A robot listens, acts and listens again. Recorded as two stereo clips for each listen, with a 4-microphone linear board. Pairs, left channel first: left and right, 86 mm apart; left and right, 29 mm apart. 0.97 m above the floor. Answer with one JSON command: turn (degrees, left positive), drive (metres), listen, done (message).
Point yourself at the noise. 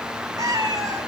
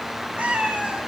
{"turn": -45}
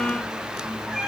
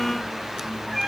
{"done": "Facing the cat meowing."}